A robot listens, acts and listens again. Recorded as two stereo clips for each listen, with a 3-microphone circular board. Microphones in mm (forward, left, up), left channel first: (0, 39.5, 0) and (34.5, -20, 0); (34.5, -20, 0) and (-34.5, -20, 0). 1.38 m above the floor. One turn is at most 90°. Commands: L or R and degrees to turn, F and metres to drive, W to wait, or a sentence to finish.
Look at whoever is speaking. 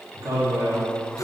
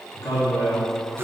R25
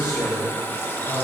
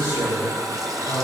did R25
L10
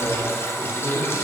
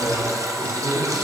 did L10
Facing the man speaking.